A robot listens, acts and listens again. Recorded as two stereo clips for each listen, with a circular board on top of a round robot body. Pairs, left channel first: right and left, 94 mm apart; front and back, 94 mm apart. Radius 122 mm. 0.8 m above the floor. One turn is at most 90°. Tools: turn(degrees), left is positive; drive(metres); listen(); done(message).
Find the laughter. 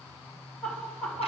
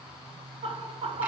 turn(degrees=-90)
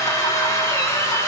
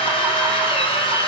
turn(degrees=-85)
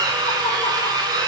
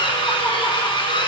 listen()
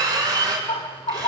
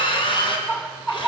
turn(degrees=-75)
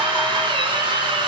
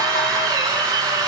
listen()
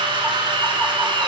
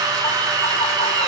listen()
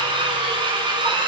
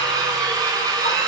done("I heard laughter from this way, but can't make it out now.")